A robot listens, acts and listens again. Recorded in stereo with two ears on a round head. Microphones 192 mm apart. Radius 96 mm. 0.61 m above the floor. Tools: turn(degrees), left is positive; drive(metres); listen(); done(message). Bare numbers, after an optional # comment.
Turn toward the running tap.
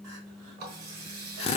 # The running tap: about 45° right or 135° right.
turn(-45)
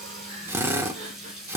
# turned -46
done("Found it: a running tap, straight ahead.")